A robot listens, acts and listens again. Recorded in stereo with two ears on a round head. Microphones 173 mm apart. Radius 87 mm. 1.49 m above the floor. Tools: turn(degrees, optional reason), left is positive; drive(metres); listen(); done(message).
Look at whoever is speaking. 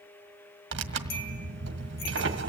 listen()
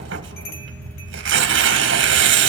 listen()
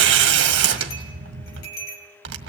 done("I can't make out anyone speaking, only tearing paper and a bell.")